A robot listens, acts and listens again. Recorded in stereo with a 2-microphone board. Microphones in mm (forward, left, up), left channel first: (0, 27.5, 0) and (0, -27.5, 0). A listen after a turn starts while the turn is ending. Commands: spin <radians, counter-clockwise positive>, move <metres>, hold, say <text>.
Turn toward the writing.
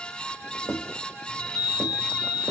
spin 0.79
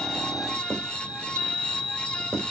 say Facing the writing.